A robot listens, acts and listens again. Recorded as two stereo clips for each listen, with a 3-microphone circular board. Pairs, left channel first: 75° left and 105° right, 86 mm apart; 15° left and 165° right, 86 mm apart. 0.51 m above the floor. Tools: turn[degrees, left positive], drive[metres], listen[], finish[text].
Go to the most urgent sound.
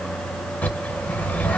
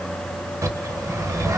Action: listen[]
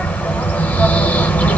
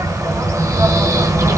Action: listen[]
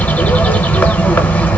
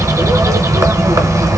Action: finish[I can't make out anything urgent, only a bird.]